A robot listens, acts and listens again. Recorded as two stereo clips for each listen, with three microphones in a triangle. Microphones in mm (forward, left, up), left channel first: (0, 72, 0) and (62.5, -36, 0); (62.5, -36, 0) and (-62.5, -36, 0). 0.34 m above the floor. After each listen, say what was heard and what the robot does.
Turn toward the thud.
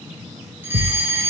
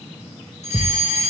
The thud: 65° right. Turn 65° right.
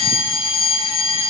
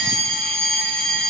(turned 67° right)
Facing where the thud came from. I can't hear it now.